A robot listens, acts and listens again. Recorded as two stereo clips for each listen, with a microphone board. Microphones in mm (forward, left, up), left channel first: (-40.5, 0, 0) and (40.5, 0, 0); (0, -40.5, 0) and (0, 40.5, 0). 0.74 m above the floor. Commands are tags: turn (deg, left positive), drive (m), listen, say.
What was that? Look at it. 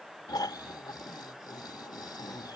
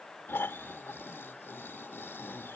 <turn deg="-150"/>
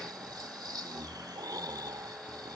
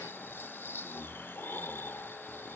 <turn deg="-30"/>
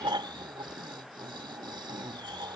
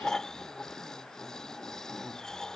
<turn deg="-10"/>
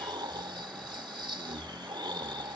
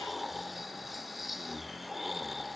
<say>Facing the snoring.</say>